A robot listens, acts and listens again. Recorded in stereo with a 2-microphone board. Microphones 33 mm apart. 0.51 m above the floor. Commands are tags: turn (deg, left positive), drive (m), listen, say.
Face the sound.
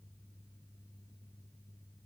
<listen/>
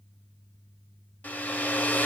<turn deg="60"/>
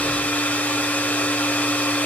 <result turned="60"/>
<turn deg="60"/>
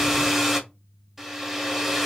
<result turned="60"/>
<say>Found it: a hair dryer, straight ahead, under 1 m away.</say>